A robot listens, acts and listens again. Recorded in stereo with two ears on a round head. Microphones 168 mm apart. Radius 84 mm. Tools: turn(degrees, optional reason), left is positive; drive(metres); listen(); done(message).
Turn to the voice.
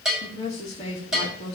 turn(degrees=30, reason="The woman speaking: about 30° left or 150° left.")
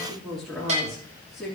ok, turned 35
done("Facing the woman speaking, 2 to 4 m away.")